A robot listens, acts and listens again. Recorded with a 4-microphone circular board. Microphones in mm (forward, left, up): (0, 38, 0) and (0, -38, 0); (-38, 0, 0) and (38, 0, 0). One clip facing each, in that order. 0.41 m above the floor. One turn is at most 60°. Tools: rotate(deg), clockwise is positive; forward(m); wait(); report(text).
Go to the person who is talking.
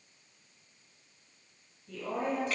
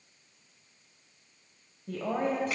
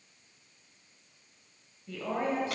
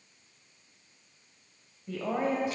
rotate(60)
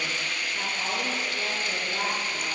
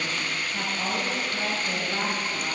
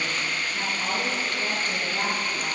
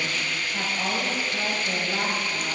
rotate(25)
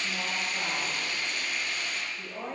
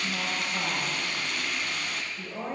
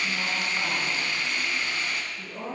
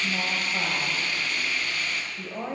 forward(1.0)
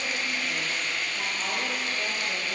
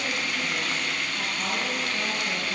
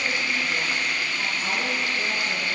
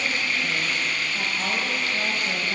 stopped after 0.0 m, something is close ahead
wait()
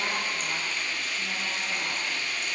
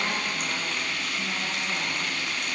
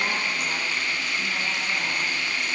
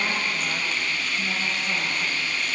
wait()
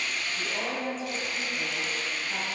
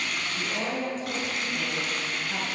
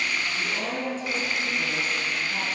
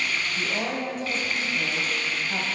report("Something is in my way. I am facing the woman speaking but have not reached it.")